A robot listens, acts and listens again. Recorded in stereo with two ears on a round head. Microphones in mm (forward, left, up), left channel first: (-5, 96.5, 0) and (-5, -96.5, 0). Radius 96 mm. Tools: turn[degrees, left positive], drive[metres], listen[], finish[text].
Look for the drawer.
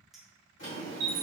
Thought: The drawer: about 65° left or 115° left.
Action: turn[65]
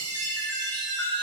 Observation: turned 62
Action: listen[]
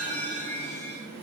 Action: finish[Found it: a drawer, straight ahead.]